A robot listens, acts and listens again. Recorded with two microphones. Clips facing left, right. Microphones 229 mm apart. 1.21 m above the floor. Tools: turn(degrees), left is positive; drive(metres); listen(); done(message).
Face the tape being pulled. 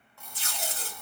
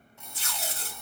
turn(degrees=35)
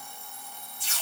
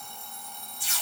turn(degrees=105)
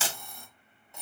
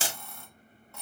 turn(degrees=-45)
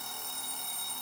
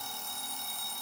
listen()
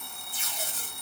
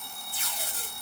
turn(degrees=25)
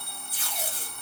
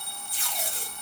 done("Facing the tape being pulled, 2 to 4 m away.")